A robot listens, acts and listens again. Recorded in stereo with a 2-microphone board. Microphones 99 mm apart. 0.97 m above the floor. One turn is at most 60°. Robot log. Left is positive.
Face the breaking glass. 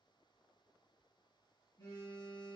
cmd idle
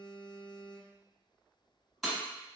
cmd yaw +30
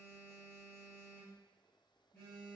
cmd idle
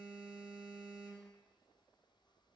end: I heard breaking glass, but can't make it out now. It was about 30° right or 150° left.